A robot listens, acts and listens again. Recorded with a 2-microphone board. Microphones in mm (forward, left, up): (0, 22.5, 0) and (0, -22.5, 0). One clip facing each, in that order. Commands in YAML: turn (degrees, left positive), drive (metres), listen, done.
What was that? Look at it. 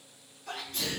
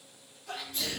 turn: 60
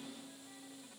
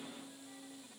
listen: true
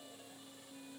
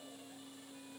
done: "I heard a sneeze, but can't make it out now. It was about straight ahead or 60° left."